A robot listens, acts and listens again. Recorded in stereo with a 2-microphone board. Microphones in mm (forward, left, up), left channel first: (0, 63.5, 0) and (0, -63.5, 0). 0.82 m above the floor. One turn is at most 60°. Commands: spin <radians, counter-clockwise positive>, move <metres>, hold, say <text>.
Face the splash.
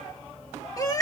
hold
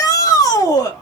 hold
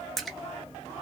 spin 0.52
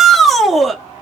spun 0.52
hold
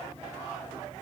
say I heard a splash, but can't make it out now. It was about 30° right or 150° left.